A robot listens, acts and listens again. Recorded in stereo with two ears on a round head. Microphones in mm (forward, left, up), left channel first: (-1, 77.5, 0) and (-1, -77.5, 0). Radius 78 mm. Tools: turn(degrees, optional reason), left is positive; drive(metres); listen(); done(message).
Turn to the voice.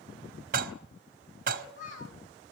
turn(degrees=45, reason="The child speaking: about 45° left or 135° left.")
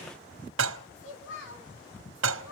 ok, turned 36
turn(degrees=95, reason="So it is at 95° left.")
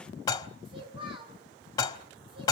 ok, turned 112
turn(degrees=-30, reason="The child speaking is now 30° right.")
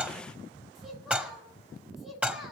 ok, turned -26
done("Facing the child speaking.")